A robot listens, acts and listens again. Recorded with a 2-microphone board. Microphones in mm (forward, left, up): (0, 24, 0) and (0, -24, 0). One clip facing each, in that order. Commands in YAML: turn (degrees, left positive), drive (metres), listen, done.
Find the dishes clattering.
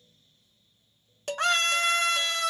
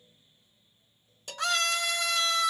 turn: 55
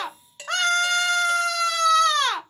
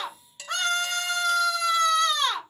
turn: 30
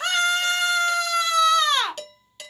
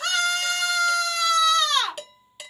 turn: -10
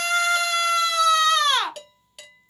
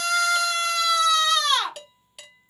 done: "Facing the dishes clattering."